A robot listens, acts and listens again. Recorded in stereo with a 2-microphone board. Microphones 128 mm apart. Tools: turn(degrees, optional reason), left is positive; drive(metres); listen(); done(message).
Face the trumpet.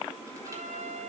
turn(degrees=-70, reason="The trumpet: about 70° right or 110° right.")
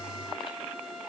done("Facing the trumpet.")